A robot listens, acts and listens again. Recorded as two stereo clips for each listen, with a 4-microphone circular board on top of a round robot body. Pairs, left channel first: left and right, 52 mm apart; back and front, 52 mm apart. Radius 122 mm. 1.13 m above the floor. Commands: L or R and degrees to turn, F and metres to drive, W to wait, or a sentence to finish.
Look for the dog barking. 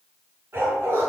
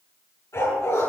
R140
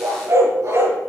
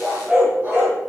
R60
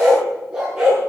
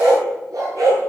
R15
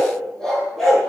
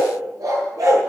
Found it: a dog barking, straight ahead.